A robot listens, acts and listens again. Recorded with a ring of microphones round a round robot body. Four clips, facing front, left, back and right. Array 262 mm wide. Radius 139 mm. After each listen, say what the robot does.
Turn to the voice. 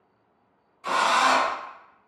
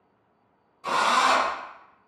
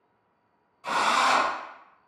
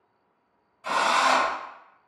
Keep listening.
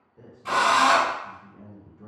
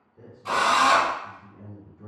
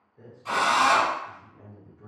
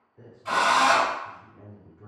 Turn 35° left.
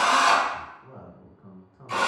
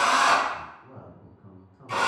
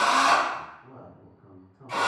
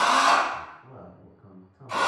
Turn 20° left.
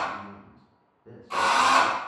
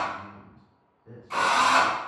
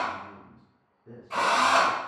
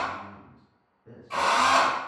Found it: a man speaking, straight ahead, 1 to 2 m away.